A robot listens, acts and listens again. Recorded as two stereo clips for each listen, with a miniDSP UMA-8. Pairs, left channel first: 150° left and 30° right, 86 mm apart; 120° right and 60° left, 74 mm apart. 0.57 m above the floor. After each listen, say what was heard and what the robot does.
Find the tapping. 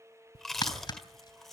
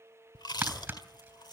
The tapping: 130° left. Turn 130° left.
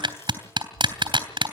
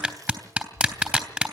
The tapping is now 10° right. Turn 10° right.
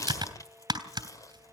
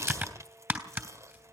Found it: tapping, straight ahead.